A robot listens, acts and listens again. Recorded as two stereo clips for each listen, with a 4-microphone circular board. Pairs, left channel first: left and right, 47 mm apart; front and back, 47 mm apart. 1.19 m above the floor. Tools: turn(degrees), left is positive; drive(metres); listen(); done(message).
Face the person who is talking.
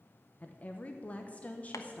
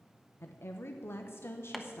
turn(degrees=30)
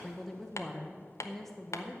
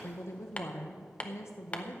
done("Facing the woman speaking, under 1 m away.")